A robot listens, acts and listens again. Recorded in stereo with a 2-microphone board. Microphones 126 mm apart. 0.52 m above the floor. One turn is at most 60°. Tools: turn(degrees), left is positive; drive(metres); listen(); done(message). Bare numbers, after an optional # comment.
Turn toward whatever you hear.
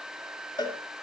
# The cowbell: about 35° left or 145° left.
turn(35)
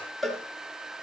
done("Found it: a cowbell, straight ahead.")